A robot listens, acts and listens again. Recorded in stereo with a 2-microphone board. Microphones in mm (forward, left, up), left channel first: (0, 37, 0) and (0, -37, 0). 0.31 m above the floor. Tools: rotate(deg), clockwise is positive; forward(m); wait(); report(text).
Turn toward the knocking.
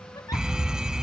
wait()
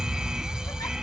wait()
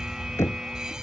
rotate(-40)
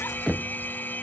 report("Found it: knocking, straight ahead.")